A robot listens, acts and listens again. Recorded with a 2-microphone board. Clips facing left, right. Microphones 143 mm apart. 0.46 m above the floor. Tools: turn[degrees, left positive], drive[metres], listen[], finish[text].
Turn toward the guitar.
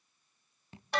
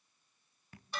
Action: listen[]
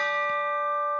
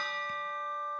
Action: listen[]
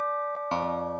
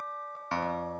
Thought: The guitar: about 20° left or 160° left.
Action: turn[20]
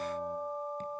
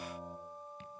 Action: listen[]
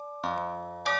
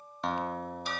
Action: finish[Facing the guitar.]